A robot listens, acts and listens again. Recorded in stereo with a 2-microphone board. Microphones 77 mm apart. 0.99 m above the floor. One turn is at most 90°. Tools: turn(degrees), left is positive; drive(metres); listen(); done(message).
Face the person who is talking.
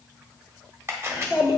turn(degrees=-55)
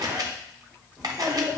done("Facing the child speaking.")